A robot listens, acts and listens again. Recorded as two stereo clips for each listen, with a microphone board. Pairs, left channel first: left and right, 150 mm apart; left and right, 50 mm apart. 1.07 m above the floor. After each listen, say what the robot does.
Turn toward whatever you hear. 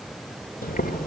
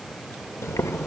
Turn 90° left.
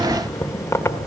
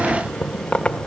Turn 15° left.
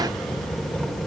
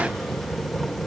Found it: boiling, straight ahead.